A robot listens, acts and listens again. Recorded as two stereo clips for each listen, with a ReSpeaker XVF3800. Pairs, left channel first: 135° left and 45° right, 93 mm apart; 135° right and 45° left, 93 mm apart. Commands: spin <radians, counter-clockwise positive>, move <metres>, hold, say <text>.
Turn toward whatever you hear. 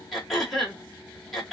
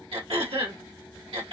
spin 0.79
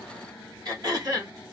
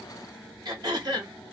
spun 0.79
say Facing the throat clearing, 1 to 2 m away.